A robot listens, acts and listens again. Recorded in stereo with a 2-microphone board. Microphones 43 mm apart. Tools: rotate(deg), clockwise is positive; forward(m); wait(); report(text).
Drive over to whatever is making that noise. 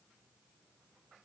wait()
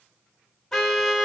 rotate(-30)
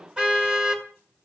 rotate(20)
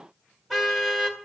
rotate(10)
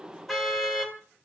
forward(1.0)
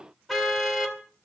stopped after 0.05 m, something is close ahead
report("Blocked. The car horn is further on, straight ahead.")